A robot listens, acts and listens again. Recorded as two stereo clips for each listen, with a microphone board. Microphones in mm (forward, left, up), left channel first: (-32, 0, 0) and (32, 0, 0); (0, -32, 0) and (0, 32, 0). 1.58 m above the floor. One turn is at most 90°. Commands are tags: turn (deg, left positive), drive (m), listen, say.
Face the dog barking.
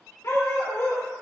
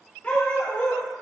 <turn deg="-90"/>
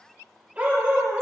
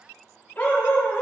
<turn deg="-55"/>
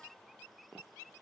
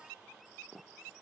<listen/>
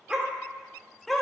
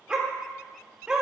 <turn deg="90"/>
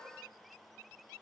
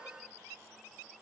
<turn deg="30"/>
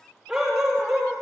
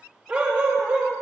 <turn deg="65"/>
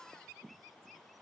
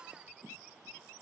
<listen/>
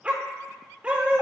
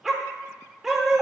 <turn deg="15"/>
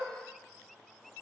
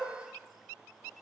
<listen/>
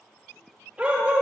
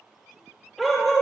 <say>Facing the dog barking.</say>